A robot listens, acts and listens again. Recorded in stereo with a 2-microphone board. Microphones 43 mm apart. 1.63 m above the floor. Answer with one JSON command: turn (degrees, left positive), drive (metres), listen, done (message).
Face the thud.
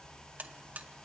{"listen": true}
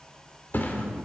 {"turn": 50}
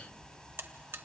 {"listen": true}
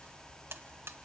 {"done": "I heard a thud, but can't make it out now. It was about straight ahead or 80° left."}